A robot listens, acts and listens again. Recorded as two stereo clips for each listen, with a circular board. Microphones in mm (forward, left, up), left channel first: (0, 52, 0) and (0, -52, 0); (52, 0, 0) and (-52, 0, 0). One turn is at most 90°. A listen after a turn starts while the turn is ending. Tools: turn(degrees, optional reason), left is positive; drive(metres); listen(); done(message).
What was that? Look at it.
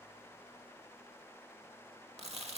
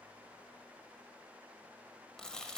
turn(degrees=-80, reason="The chewing: 80° right.")
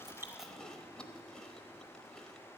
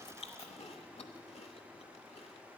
turn(degrees=10, reason="The chewing is now 10° left.")
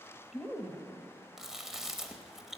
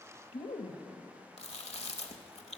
done("Facing the chewing, under 1 m away.")